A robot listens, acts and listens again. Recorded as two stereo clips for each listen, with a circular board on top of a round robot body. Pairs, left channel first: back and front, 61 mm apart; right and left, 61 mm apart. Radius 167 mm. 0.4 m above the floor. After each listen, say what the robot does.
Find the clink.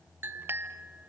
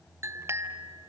Turn 50° left.
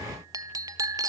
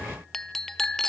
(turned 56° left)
Found it: a clink, straight ahead.